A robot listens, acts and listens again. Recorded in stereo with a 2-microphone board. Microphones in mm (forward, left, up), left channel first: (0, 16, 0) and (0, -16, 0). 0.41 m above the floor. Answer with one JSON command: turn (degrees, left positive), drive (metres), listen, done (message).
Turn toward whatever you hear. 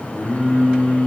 {"turn": 90}
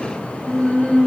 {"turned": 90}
{"turn": 15}
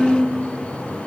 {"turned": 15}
{"done": "Found it: singing, straight ahead, over 4 m away."}